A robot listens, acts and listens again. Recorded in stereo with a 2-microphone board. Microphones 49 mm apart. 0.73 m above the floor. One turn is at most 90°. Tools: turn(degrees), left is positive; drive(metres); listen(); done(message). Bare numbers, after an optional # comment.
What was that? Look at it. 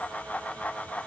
listen()
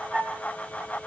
# The flute: about 40° right or 140° right.
turn(-40)
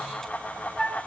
done("Facing the flute.")